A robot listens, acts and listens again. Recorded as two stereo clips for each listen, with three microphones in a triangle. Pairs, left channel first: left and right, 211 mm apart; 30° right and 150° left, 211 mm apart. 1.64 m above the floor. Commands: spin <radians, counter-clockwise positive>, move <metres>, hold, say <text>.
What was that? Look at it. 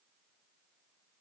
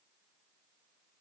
hold
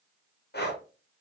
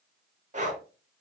spin 1.83
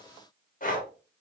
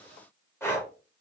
spin 0.79
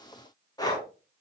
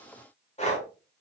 spin 0.35
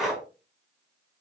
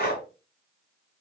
say Found it: breathing, straight ahead, under 1 m away.